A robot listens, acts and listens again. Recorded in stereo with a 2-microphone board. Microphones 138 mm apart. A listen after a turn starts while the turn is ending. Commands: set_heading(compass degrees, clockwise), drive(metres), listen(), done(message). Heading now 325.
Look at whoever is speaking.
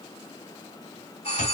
listen()
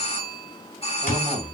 set_heading(5)
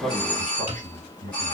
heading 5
set_heading(105)
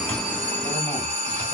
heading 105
listen()
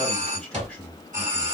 done("Found it: a man speaking, straight ahead, 2 to 4 m away.")